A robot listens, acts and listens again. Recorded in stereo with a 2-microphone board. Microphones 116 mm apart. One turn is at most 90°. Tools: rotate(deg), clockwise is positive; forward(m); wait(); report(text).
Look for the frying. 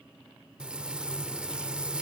rotate(30)
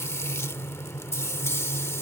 rotate(-20)
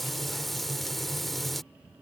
report("Found it: frying, straight ahead.")